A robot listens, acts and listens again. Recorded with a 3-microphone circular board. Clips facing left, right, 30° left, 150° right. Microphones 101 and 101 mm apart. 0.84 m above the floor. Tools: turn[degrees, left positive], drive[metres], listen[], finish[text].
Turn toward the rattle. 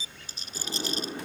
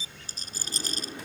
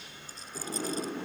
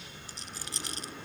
Thought: The rattle: 140° right.
Action: turn[-140]
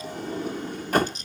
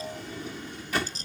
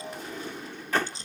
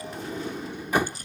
Thought: The rattle is now 35° right.
Action: turn[-35]
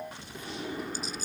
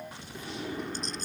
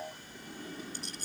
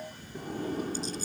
Action: listen[]
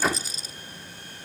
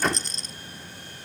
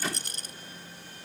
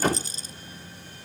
Action: finish[Found it: a rattle, straight ahead.]